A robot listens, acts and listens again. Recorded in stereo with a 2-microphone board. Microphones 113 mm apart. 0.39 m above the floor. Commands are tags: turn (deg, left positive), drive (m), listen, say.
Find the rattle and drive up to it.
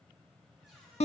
<listen/>
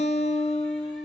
<listen/>
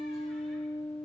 <say>I can't make out a rattle to turn to.</say>